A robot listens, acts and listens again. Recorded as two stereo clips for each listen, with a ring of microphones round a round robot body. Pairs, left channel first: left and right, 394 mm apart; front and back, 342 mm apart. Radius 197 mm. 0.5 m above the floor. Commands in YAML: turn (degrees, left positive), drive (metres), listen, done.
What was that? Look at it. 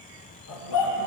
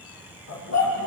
turn: 45
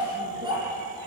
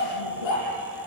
turn: -10
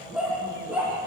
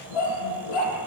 done: "Found it: a dog barking, straight ahead, over 4 m away."